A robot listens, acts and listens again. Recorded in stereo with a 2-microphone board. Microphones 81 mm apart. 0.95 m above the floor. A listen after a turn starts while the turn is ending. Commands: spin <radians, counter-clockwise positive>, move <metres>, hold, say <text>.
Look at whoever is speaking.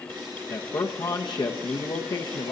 spin 1.05
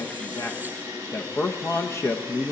spin 0.70
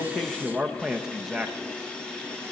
say Facing the man speaking, under 1 m away.